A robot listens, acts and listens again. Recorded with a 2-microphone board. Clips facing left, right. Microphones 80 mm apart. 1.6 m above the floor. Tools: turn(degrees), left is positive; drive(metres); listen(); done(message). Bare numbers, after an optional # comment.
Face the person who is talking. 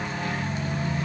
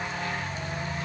listen()
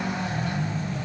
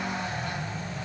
listen()
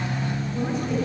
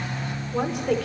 turn(-90)
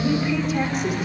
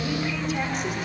done("Facing the woman speaking, over 4 m away.")